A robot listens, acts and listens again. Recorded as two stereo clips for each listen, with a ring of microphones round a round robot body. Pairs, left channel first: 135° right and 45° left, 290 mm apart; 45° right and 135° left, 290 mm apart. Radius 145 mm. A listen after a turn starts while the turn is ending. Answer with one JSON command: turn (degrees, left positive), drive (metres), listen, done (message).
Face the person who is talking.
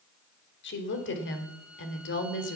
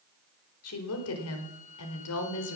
{"turn": -85}
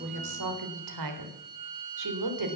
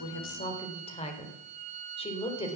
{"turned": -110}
{"turn": 25}
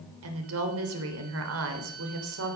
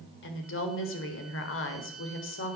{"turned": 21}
{"done": "Found it: a woman speaking, straight ahead, 2 to 4 m away."}